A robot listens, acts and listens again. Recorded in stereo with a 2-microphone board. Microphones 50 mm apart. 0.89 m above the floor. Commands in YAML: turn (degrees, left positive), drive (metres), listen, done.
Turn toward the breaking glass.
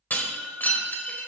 turn: 35
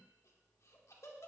listen: true
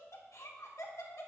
done: "I heard breaking glass, but can't make it out now. It was about straight ahead or 110° left."